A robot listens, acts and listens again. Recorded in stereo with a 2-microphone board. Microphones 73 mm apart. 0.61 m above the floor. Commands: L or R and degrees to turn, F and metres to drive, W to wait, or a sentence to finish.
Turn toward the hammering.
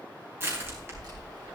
W
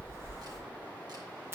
W
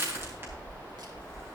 I can't make out hammering, only crushing.